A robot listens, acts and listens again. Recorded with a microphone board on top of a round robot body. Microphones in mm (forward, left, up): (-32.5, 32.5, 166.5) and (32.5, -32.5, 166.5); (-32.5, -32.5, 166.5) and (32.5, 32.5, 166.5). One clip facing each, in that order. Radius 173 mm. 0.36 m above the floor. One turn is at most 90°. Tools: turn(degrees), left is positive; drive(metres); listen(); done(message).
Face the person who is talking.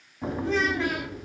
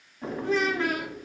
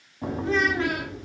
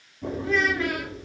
turn(degrees=-80)
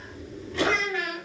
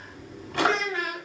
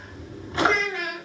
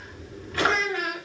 done("Facing the child speaking.")